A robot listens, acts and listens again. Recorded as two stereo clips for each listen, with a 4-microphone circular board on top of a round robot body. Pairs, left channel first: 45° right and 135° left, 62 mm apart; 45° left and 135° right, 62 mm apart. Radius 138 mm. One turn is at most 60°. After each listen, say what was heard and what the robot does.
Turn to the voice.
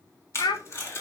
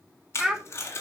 The child speaking: 55° right. Turn 55° right.
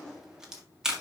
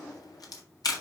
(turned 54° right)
Keep listening.
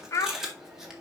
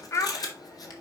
Found it: a child speaking, straight ahead.